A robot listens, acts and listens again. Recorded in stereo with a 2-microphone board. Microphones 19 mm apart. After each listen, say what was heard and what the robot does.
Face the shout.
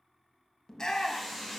The shout: about 40° left or 140° left. Turn 40° left.
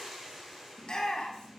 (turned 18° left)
So it is at 130° left. Turn 130° left.
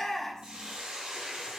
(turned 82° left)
The shout is now 35° left. Turn 35° left.
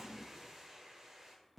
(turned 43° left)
Nothing new. It was at 10° right. Turn 10° right.
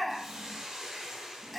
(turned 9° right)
Facing the shout.